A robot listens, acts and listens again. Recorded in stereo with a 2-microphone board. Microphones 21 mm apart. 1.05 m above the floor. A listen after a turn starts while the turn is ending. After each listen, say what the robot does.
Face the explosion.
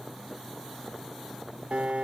Keep listening.
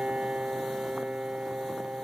Keep listening.
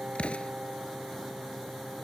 Turn 75° left.
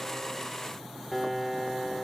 Keep listening.
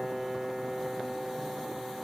I heard an explosion, but can't make it out now. It was about straight ahead or 30° left.